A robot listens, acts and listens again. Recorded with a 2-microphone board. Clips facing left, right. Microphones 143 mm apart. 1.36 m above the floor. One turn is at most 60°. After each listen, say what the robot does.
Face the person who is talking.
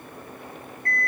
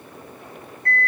Keep listening.
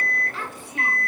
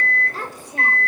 Turn 40° right.
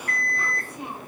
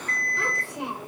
Turn 60° right.
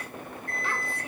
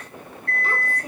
Turn 40° right.
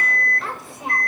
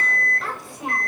Found it: a child speaking, straight ahead.